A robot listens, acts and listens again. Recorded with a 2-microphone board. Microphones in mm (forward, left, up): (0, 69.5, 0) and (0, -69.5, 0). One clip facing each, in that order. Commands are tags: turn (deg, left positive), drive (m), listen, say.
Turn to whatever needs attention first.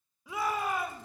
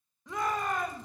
<turn deg="30"/>
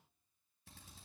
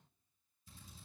<listen/>
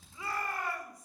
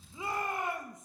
<turn deg="-20"/>
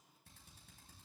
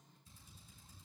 <listen/>
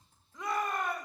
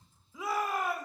<say>Found it: a shout, straight ahead, 1 to 2 m away.</say>